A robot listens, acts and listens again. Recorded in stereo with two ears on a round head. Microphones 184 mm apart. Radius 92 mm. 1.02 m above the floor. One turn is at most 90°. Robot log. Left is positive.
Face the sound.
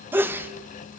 cmd yaw -30
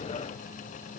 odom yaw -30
cmd idle
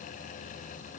end: I heard a sneeze, but can't make it out now. It was about 20° left or 140° right.